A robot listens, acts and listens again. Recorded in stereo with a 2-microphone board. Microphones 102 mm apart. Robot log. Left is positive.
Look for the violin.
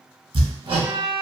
note: The violin: about 20° right or 160° right.
cmd yaw -20
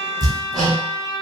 note: So it is at 140° right.
cmd yaw -140
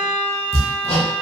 note: The violin is now 15° right.
cmd yaw -15
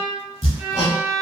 note: The violin is now 10° right.
cmd yaw -10
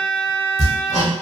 end: Facing the violin.